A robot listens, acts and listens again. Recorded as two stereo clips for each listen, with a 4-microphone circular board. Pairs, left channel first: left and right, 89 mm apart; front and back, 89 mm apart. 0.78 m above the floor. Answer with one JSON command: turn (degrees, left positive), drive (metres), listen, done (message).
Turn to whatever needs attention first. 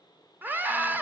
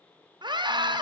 {"turn": -155}
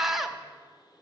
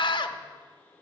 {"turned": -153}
{"done": "Facing the scream, under 1 m away."}